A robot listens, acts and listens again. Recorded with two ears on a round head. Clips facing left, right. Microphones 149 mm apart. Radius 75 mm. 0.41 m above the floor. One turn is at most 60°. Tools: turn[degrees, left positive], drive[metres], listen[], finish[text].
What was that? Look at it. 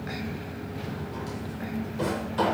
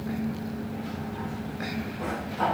Action: turn[60]
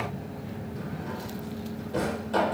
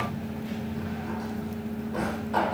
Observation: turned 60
Thought: So it is at 35° left.
Action: turn[35]
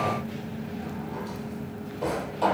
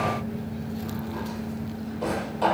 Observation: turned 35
Action: finish[Facing the drawer, 2 to 4 m away.]